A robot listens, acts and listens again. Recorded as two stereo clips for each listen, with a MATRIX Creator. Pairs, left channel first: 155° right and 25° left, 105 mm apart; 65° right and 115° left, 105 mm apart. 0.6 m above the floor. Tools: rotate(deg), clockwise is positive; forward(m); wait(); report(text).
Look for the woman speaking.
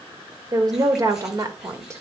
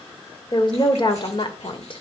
rotate(35)
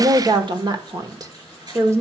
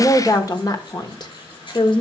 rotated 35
rotate(40)
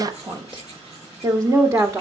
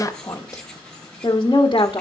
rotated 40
rotate(35)
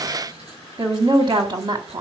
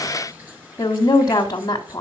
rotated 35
rotate(15)
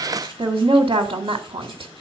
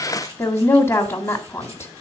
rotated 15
report("Found it: a woman speaking, straight ahead, 1 to 2 m away.")